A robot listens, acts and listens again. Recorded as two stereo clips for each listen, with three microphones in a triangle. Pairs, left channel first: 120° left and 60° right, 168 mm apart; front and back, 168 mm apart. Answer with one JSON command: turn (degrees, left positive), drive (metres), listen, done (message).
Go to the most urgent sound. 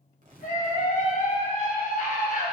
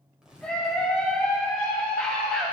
{"turn": 85}
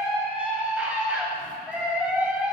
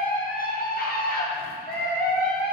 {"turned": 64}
{"turn": 20}
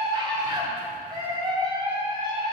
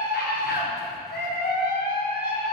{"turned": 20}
{"drive": 1.0}
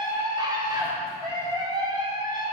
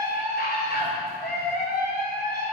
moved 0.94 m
{"drive": 1.0}
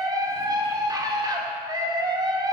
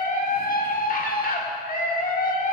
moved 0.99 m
{"drive": 1.0}
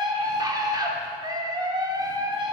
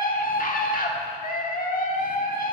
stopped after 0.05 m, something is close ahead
{"done": "Arrived at the scream, straight ahead."}